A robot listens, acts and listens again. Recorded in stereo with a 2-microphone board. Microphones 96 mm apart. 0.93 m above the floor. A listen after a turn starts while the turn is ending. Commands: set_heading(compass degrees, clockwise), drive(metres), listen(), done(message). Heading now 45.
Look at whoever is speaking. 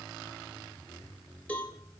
listen()
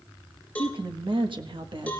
set_heading(105)
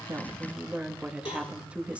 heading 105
set_heading(120)
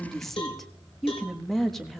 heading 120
done("Facing the woman speaking, 1 to 2 m away.")